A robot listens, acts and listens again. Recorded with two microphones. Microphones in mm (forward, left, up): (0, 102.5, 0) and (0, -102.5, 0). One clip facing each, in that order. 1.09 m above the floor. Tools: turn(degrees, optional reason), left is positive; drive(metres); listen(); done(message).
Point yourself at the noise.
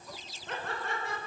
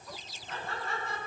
turn(degrees=90)
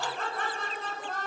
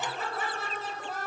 done("Facing the laughter.")